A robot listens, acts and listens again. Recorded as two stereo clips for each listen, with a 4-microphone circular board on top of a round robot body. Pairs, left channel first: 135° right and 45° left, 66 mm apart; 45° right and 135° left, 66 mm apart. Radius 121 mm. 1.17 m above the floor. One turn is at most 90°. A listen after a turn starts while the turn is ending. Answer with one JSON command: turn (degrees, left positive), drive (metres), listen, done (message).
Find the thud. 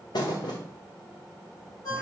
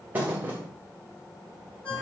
{"turn": -90}
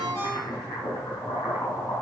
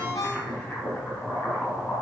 {"turn": -70}
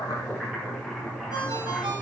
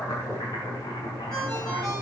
{"done": "Facing where the thud came from. I can't hear it now."}